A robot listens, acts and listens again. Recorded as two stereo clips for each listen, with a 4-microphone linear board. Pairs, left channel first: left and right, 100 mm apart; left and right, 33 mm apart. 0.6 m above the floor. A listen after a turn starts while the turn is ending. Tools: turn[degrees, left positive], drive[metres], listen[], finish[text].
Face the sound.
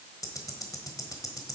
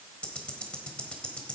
Thought: The ticking: about 35° left or 145° left.
Action: turn[35]
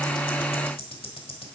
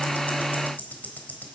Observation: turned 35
Thought: So it is at 110° left.
Action: turn[110]
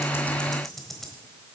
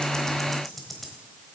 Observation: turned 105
Action: finish[Found it: ticking, straight ahead.]